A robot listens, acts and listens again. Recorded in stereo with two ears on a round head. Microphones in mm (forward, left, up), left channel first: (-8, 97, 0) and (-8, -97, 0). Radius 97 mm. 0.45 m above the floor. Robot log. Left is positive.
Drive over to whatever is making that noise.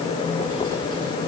cmd idle
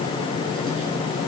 cmd idle
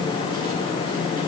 end: I can't make out anything to turn to.